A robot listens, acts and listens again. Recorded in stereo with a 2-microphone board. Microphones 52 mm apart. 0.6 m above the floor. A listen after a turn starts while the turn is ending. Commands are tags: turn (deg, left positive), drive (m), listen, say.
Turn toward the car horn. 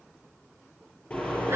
<turn deg="25"/>
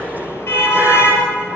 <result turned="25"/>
<turn deg="130"/>
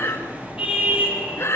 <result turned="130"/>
<turn deg="-25"/>
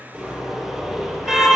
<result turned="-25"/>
<turn deg="-10"/>
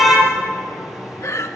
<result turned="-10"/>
<say>Found it: a car horn, straight ahead, over 4 m away.</say>